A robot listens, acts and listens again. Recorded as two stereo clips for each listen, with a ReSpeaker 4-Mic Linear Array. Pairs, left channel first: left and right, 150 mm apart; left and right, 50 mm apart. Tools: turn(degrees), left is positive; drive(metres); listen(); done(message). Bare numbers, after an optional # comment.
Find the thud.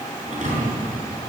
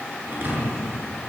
# The thud: about 50° right or 130° right.
turn(-50)
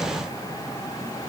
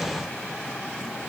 listen()
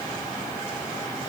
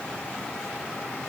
done("I heard a thud, but can't make it out now. It was about straight ahead or 80° right.")